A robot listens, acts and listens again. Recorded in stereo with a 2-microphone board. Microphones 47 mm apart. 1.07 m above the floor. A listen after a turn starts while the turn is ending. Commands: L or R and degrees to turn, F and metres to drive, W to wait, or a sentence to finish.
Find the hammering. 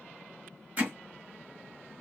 R35
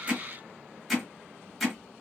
Found it: hammering, straight ahead.